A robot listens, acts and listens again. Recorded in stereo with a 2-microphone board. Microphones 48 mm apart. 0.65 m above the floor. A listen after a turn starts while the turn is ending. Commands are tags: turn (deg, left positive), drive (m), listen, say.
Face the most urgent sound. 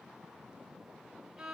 <listen/>
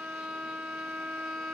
<listen/>
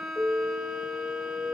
<turn deg="90"/>
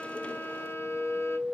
<say>Found it: an alarm, straight ahead, 2 to 4 m away.</say>